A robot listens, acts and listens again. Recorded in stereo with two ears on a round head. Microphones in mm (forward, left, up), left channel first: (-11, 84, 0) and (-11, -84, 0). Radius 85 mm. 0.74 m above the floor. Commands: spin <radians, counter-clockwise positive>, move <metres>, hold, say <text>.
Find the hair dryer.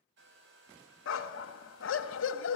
spin -1.13
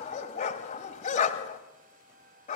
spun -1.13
spin -0.79
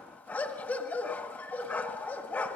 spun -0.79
hold
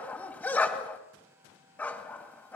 spin -0.26
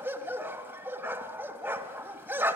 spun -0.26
hold
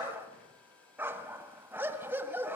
say Facing the hair dryer.